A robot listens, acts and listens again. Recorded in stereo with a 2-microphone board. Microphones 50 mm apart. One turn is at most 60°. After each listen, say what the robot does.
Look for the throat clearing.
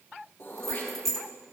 Turn 45° left.
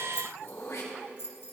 Turn 60° left.
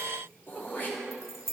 Turn 45° left.
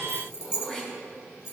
Turn 15° left.
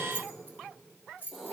Turn 10° left.
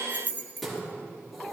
Found it: throat clearing, straight ahead, 2 to 4 m away.